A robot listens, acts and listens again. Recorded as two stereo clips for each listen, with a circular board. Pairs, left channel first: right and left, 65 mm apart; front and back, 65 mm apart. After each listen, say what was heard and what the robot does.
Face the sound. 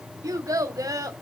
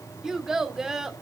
The child speaking: 100° left. Turn 100° left.
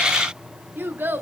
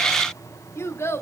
The child speaking is now 40° left. Turn 40° left.
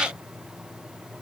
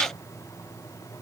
Keep listening.
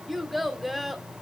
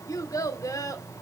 Found it: a child speaking, straight ahead.